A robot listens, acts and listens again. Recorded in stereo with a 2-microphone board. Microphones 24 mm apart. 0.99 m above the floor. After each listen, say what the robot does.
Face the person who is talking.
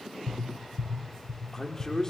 Turn 20° left.
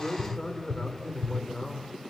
Turn 140° left.
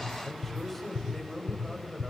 Turn 10° left.
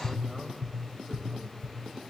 Keep listening.
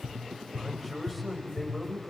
Facing the man speaking, over 4 m away.